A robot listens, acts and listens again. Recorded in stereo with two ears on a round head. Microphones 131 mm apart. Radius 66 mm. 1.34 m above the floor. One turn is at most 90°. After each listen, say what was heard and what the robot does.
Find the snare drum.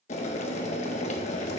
Keep listening.
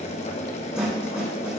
Turn 30° right.
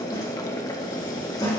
So it is at 25° left. Turn 25° left.
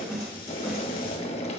Found it: a snare drum, straight ahead, 2 to 4 m away.